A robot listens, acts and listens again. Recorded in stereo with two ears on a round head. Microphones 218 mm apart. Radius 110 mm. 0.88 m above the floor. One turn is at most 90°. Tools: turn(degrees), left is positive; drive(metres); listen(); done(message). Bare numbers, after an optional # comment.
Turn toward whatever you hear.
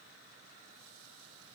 listen()
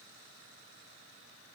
listen()
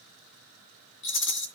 # The rattle: about 55° left or 125° left.
turn(55)
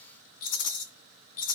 # So it is at 70° left.
turn(70)
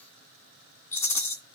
# The rattle is now 10° left.
turn(10)
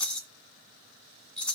done("Facing the rattle, 2 to 4 m away.")